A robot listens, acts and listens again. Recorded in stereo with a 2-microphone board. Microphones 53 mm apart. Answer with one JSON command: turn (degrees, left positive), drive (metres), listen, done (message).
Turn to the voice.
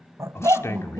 {"turn": 60}
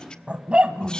{"listen": true}
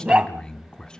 {"turn": 20}
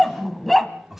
{"done": "Found it: a man speaking, straight ahead, 1 to 2 m away."}